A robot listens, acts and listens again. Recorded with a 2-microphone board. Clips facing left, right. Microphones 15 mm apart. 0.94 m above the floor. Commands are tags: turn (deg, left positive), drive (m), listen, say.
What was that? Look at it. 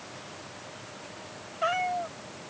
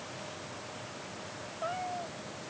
<turn deg="70"/>
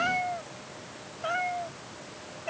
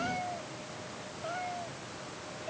<turn deg="65"/>
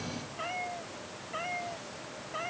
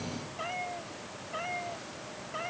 <say>Facing the cat meowing.</say>